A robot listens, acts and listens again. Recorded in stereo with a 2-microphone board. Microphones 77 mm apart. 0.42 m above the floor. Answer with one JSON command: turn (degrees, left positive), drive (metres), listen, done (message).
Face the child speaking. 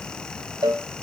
{"listen": true}
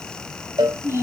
{"turn": -40}
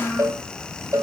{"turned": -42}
{"done": "Facing the child speaking."}